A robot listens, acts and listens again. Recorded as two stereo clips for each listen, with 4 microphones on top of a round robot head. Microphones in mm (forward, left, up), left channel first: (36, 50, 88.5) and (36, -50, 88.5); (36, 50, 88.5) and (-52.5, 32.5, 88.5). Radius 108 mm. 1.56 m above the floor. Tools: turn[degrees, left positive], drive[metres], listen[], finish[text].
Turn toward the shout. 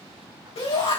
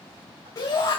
Thought: The shout: 60° left.
Action: turn[60]
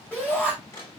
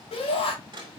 Thought: The shout is now 10° left.
Action: turn[10]
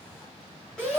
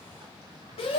Action: finish[Facing the shout, over 4 m away.]